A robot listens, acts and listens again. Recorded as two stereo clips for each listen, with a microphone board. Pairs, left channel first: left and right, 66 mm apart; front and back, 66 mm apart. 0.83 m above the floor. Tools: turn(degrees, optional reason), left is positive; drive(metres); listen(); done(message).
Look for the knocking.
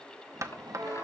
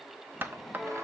turn(degrees=-120, reason="The knocking: 120° right.")
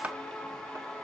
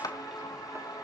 turn(degrees=-20, reason="The knocking is now 20° right.")
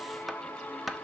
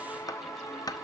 done("Found it: knocking, straight ahead, under 1 m away.")